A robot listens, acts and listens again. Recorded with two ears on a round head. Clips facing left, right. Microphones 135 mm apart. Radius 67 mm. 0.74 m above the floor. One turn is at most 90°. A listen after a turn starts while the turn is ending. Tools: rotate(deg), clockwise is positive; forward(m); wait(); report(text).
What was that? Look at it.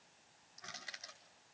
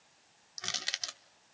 rotate(90)
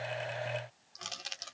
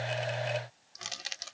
report("Found it: crushing, straight ahead.")